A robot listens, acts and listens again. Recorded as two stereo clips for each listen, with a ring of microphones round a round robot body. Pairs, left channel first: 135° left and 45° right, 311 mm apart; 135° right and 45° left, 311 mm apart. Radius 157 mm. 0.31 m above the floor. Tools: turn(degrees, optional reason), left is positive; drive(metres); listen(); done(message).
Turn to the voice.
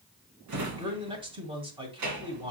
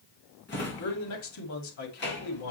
turn(degrees=-115, reason="The man speaking: 115° right.")
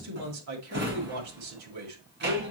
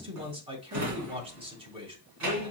turn(degrees=-25, reason="The man speaking is now 25° right.")
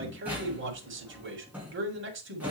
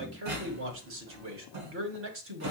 done("Facing the man speaking, 1 to 2 m away.")